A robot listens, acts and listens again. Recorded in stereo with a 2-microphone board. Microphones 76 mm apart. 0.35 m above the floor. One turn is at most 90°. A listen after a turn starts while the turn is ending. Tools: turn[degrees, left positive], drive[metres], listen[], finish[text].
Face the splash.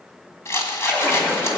Thought: The splash: about 25° left or 155° left.
Action: turn[25]
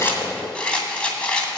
Action: listen[]
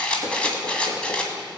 Action: finish[I heard a splash, but can't make it out now. It was about straight ahead or 130° left.]